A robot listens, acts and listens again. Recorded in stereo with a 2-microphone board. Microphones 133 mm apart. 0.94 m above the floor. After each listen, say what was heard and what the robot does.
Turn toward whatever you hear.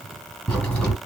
Turn 30° left.
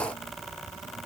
Keep listening.
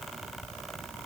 I heard a crack, but can't make it out now. It was about 20° right or 140° left.